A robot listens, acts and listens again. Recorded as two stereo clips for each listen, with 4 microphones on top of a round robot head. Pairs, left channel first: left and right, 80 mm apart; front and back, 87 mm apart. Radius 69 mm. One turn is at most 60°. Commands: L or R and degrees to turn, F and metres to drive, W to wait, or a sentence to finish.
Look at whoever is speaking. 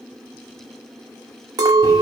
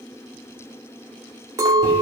W
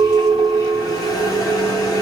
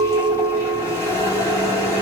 W
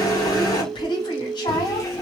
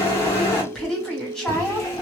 L60
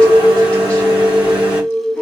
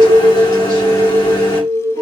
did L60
L20
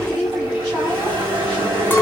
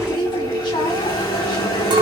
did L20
Found it: a woman speaking, straight ahead, 1 to 2 m away.